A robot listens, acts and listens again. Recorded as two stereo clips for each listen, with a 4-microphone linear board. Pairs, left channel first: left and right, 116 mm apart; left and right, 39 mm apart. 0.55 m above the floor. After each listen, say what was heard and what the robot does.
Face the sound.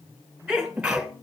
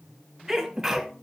Turn 30° right.
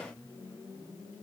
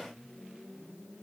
Keep listening.
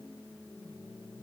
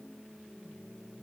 I heard a sneeze, but can't make it out now. It was about 25° left or 145° right.